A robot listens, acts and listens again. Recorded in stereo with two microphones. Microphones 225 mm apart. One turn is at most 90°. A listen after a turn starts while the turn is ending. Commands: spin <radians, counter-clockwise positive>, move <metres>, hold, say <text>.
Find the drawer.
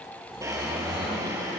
spin -0.52
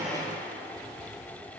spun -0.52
hold
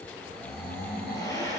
spin 0.26
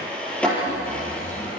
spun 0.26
say Found it: a drawer, straight ahead.